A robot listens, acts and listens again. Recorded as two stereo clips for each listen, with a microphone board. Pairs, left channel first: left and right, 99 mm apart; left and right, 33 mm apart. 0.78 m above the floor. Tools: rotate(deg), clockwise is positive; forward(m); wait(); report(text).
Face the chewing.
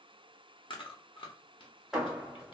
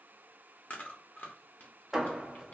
rotate(-60)
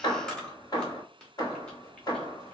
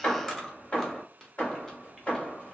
rotate(-10)
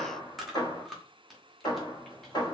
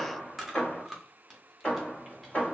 report("Found it: chewing, straight ahead.")